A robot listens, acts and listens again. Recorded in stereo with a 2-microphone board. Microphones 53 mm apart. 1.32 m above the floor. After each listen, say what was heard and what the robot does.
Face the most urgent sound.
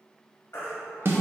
The baby crying: about 55° left or 125° left. Turn 55° left.
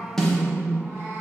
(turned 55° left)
Keep listening.
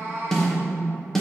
Keep listening.
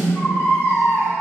So it is at 60° left. Turn 60° left.
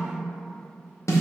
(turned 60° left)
Keep listening.
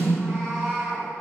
Keep listening.
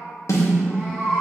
Facing the baby crying, 1 to 2 m away.